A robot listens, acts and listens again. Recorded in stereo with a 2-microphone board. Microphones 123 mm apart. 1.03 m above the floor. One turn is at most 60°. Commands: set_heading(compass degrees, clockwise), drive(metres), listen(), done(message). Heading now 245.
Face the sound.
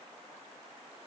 listen()
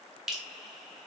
set_heading(275)
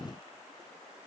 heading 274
listen()
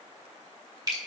set_heading(334)
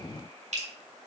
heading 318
set_heading(18)
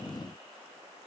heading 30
set_heading(60)
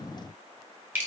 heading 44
set_heading(59)
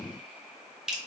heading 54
done("Facing the dripping.")